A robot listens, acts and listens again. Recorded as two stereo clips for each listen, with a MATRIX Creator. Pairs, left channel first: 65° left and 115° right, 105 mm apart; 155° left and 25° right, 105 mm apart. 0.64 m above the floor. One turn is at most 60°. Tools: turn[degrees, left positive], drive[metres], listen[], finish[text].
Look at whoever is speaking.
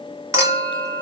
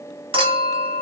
Action: listen[]
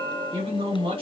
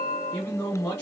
Thought: The man speaking: 130° right.
Action: turn[-60]
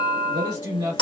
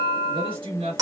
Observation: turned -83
Thought: The man speaking is now 50° right.
Action: turn[-50]
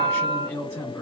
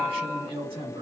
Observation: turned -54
Action: finish[Facing the man speaking, 1 to 2 m away.]